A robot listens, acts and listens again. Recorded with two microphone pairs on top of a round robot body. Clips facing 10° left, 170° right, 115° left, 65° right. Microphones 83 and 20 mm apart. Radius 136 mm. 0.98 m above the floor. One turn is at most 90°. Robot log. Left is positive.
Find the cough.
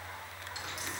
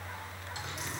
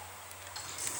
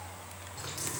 cmd idle
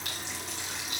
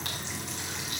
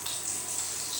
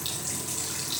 cmd idle
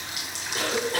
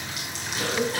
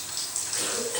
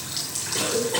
note: The cough: 40° right.
cmd yaw -40
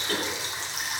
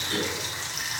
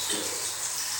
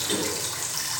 end: Facing the cough, over 4 m away.